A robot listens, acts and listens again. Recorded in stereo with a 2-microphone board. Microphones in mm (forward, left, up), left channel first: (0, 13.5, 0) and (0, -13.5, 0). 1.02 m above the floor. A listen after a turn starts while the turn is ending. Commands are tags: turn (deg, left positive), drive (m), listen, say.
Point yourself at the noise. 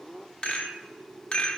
<turn deg="35"/>
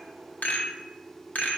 <turn deg="105"/>
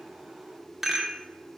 <turn deg="-10"/>
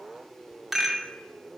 <say>Facing the rattle, 1 to 2 m away.</say>